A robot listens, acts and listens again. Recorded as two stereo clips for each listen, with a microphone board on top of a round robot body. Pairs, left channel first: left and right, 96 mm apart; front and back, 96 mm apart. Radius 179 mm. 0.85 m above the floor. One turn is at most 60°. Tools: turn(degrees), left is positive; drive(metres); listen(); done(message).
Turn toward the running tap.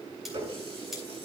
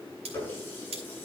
turn(degrees=-60)
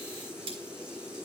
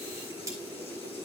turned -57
turn(degrees=-10)
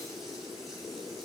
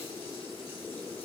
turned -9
listen()
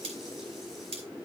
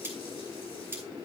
done("I heard a running tap from this way, but can't make it out now.")